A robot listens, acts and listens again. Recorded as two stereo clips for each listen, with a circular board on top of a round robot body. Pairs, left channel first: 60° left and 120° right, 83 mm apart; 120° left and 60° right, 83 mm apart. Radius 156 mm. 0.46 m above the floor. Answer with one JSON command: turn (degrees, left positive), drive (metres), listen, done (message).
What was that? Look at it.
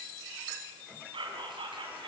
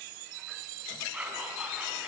{"turn": -135}
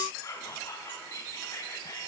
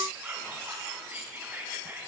{"turn": 10}
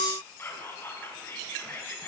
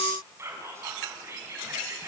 {"done": "Facing the whispering."}